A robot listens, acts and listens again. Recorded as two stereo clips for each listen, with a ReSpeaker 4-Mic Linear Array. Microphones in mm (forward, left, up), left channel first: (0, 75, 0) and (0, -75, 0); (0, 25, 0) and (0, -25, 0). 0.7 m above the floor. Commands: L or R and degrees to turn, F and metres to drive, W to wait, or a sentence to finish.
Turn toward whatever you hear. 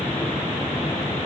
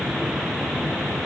W
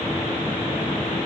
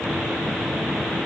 W
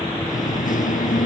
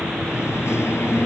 L70
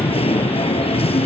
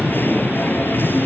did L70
L45
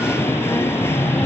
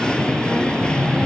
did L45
L15
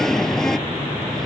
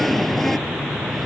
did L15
Found it: singing, straight ahead.